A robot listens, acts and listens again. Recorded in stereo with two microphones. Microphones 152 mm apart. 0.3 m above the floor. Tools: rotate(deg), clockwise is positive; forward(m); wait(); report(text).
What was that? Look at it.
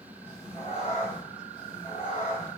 rotate(-60)
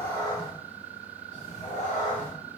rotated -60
rotate(-55)
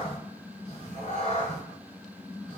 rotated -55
rotate(-50)
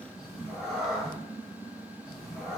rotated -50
report("Facing the cat meowing, 1 to 2 m away.")